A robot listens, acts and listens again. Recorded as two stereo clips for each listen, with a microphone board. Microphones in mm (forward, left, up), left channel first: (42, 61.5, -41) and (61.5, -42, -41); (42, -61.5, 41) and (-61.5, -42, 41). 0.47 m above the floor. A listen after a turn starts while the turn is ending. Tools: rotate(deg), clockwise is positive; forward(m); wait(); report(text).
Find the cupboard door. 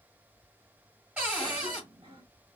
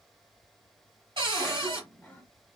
rotate(155)
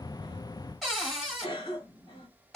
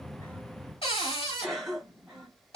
rotate(-10)
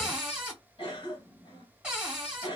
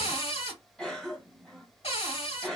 report("Found it: a cupboard door, straight ahead, 1 to 2 m away.")